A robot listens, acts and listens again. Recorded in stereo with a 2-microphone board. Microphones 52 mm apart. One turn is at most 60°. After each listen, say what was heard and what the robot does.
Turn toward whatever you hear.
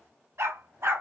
The dog barking: about 60° right or 120° right. Turn 60° right.
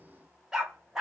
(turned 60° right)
So it is at 15° right. Turn 15° right.
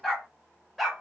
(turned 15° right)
Found it: a dog barking, straight ahead.